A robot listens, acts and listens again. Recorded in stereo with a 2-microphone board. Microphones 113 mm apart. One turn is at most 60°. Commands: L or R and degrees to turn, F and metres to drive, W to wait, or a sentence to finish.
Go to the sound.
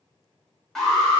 L30
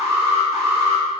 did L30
R25
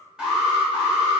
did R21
F1.0
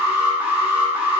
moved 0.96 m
R15
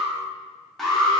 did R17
F1.0
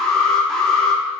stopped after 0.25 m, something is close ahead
Arrived at the alarm, straight ahead.